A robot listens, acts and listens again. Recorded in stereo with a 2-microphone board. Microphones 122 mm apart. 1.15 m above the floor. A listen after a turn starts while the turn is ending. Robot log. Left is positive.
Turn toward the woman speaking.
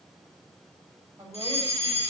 note: The woman speaking: about 25° right or 155° right.
cmd yaw -25
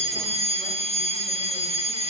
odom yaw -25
cmd idle
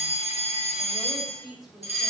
end: Found it: a woman speaking, straight ahead, over 4 m away.